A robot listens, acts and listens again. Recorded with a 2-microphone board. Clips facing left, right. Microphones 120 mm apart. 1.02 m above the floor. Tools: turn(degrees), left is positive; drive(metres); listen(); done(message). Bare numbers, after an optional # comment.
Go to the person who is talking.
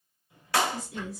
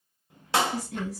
# The woman speaking: about 70° right or 110° right.
turn(-70)
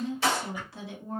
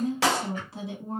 # So it is at 25° right.
turn(-25)
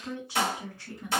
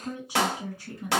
# The woman speaking is now 20° right.
turn(-20)
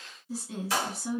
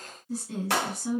drive(1.0)
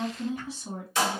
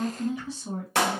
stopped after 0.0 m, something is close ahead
done("Something is in my way. I am facing the woman speaking but have not reached it.")